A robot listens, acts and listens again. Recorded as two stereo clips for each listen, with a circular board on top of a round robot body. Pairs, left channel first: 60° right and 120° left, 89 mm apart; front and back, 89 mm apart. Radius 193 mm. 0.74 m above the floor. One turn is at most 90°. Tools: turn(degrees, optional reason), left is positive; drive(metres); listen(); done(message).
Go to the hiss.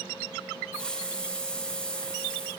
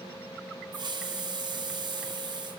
turn(degrees=-90, reason="The hiss: 140° right.")
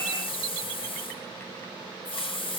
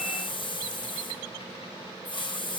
turn(degrees=-35, reason="The hiss is now 35° right.")
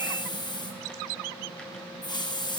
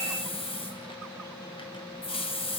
turn(degrees=-20, reason="The hiss is now 20° right.")
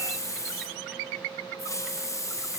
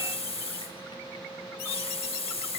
drive(metres=1.0)
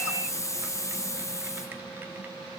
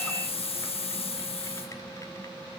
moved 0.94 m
drive(metres=1.0)
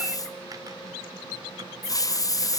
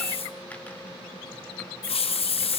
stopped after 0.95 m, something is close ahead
done("Arrived at the hiss, straight ahead.")